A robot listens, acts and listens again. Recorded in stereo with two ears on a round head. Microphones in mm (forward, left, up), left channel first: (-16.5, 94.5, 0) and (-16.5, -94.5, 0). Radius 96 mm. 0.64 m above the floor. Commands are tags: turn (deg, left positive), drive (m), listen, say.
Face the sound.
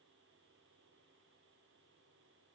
<listen/>
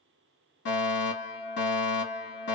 <turn deg="55"/>
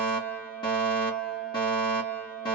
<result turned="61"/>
<turn deg="25"/>
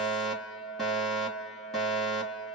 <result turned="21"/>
<say>Facing the fire alarm.</say>